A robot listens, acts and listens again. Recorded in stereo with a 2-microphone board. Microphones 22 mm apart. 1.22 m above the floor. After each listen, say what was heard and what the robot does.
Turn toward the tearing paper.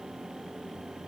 Keep listening.
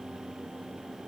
Keep listening.
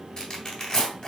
The tearing paper: about 45° left or 135° left. Turn 45° left.
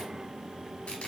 Keep listening.
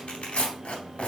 So it is at 90° left. Turn 90° left.
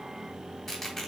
Facing the tearing paper.